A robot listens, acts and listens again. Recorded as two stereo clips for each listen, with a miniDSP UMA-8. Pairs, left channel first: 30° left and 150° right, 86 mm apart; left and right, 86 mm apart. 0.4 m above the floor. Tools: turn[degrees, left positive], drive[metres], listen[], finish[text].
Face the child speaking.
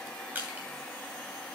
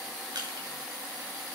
Action: listen[]
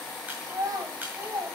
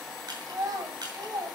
Thought: The child speaking: 115° right.
Action: turn[-115]
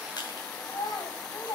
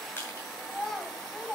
Action: finish[Found it: a child speaking, straight ahead.]